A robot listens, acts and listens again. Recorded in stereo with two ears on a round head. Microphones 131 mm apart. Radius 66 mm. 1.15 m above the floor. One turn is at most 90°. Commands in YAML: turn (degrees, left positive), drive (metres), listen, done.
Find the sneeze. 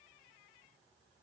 listen: true
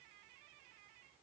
listen: true
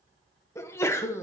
turn: 20
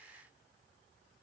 listen: true
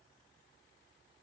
done: "I heard a sneeze, but can't make it out now. It was about straight ahead or 140° left."